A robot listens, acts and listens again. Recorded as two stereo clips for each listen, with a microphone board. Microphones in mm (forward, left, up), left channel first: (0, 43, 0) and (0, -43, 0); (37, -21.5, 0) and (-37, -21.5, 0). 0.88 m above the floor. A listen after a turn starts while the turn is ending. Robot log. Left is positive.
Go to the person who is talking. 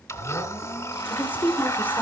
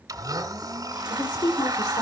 note: The woman speaking: 20° left.
cmd yaw +20
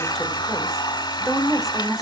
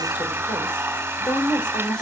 cmd fwd 1.0
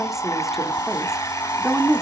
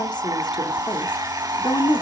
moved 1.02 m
cmd fwd 1.0
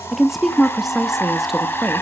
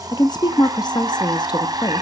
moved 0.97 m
cmd fwd 1.0
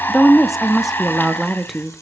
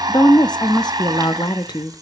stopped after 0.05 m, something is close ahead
end: Arrived at the woman speaking, straight ahead.